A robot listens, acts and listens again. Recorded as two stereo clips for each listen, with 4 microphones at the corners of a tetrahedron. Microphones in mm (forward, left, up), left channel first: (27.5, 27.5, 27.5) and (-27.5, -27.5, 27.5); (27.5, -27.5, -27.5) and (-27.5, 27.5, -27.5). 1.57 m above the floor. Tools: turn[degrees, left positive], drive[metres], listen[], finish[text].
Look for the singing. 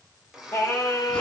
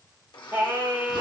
Thought: The singing: 100° left.
Action: turn[100]
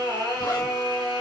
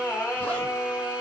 Thought: The singing is now 25° left.
Action: turn[25]
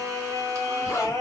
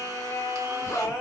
Thought: The singing is now 10° left.
Action: turn[10]
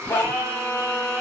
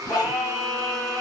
Action: finish[Found it: singing, straight ahead.]